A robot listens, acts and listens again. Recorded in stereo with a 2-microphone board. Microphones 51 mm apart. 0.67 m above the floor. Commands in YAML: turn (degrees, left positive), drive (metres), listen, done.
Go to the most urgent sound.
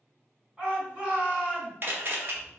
turn: -30
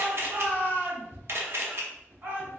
turn: -135
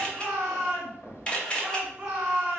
turn: -20
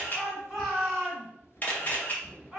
drive: 1.0
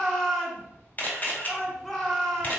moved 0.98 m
drive: 1.0
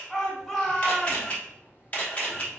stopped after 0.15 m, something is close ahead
done: "I am next to the shout."